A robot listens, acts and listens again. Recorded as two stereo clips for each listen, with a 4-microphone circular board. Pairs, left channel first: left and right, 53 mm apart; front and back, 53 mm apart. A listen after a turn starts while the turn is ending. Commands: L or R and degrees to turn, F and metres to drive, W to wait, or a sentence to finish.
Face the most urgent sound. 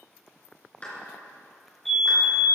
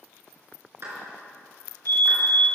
Facing the fire alarm, 2 to 4 m away.